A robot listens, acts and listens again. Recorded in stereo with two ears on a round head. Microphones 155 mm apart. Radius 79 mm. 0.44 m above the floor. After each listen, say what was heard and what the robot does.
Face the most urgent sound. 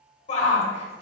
The shout: about 40° left or 140° left. Turn 40° left.
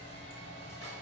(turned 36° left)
Keep listening.
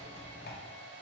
Keep listening.
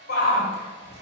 So it is at 90° left. Turn 90° left.
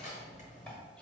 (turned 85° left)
Keep listening.
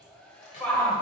Found it: a shout, straight ahead.